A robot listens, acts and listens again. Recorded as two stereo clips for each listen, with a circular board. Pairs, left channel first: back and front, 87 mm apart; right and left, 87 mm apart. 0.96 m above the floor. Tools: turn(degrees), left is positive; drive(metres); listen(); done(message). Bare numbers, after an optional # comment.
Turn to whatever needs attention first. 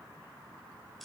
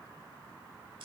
listen()
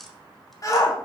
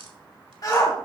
# The shout: 135° right.
turn(-135)
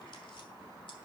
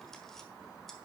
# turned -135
listen()
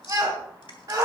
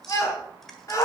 # The shout is now 40° right.
turn(-40)
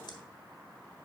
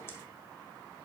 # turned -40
listen()
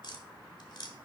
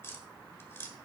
listen()
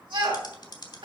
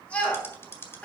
# The shout is now 15° right.
turn(-15)
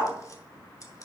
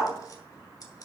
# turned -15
done("Found it: a shout, straight ahead.")